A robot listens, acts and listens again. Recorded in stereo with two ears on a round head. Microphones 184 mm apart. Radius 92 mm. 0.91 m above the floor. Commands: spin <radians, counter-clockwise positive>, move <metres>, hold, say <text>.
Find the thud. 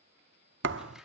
spin -1.05
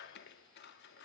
hold
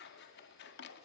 say I heard a thud, but can't make it out now. It was about straight ahead or 60° right.